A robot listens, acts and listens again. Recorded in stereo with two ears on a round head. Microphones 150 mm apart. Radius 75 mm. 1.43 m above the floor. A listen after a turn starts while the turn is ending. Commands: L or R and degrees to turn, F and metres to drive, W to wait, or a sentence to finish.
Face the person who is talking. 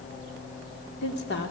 L65
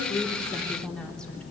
Found it: a woman speaking, straight ahead, 2 to 4 m away.